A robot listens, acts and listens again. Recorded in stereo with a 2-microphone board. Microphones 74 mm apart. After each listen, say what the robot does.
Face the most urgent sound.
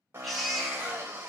Turn 30° left.
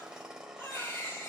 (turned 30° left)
Turn 150° left.
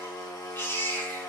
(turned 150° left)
Turn 40° left.
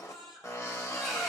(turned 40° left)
Facing the baby crying, over 4 m away.